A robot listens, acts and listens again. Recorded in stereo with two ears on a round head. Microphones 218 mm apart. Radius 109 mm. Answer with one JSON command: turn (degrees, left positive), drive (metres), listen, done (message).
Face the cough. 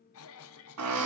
{"turn": 60}
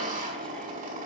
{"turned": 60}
{"listen": true}
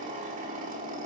{"listen": true}
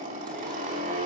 {"done": "I heard a cough, but can't make it out now. It was about straight ahead or 60° left."}